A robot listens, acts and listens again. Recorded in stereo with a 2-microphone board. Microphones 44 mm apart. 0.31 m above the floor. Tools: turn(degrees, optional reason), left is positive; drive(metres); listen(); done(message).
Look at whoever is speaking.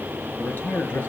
turn(degrees=55, reason="The man speaking: about 55° left or 125° left.")
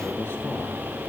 turn(degrees=65, reason="So it is at 65° left.")
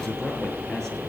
turn(degrees=10, reason="The man speaking is now 10° left.")
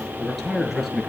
done("Found it: a man speaking, straight ahead, over 4 m away.")